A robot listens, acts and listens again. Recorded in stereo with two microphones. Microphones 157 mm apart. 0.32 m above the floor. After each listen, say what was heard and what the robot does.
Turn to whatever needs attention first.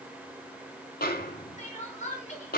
The crying: about 50° left or 130° left. Turn 50° left.
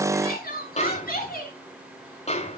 So it is at 80° left. Turn 80° left.
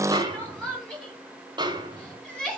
Facing the crying, over 4 m away.